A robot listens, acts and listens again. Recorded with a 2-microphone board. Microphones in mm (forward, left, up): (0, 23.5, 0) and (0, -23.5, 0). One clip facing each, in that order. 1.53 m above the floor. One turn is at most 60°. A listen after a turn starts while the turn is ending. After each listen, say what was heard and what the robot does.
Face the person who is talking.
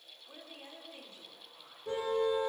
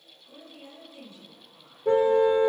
The woman speaking: about 45° left or 135° left. Turn 45° left.
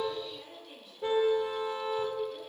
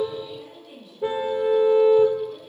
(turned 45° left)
Facing the woman speaking.